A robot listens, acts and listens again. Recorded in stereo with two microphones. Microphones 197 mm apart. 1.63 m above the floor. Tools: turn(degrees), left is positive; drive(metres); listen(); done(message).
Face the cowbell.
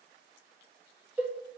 turn(degrees=-30)
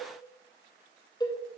turn(degrees=20)
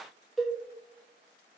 done("Facing the cowbell.")